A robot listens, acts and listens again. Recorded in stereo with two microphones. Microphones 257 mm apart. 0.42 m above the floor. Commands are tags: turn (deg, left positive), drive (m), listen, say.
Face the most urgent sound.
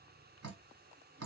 <listen/>
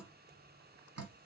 <listen/>
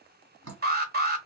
<turn deg="-35"/>
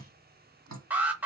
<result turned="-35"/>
<say>Found it: an alarm, straight ahead, 1 to 2 m away.</say>